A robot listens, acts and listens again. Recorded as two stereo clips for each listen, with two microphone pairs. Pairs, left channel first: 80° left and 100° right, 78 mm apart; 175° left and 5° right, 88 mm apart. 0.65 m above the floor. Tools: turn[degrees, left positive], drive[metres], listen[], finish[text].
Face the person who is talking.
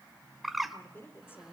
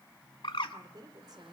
Thought: The woman speaking: 25° left.
Action: turn[25]
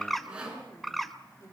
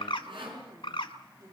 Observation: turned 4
Thought: The woman speaking is now 40° left.
Action: turn[40]
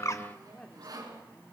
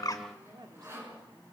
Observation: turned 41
Action: finish[Found it: a woman speaking, straight ahead.]